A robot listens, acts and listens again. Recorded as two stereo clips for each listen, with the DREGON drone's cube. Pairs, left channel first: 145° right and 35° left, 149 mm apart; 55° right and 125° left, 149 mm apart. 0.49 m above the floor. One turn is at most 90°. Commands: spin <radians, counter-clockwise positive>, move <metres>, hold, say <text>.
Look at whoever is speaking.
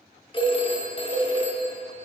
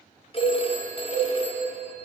hold
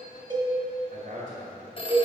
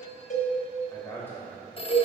spin 0.35
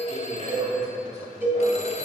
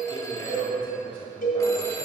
say Facing the man speaking, 1 to 2 m away.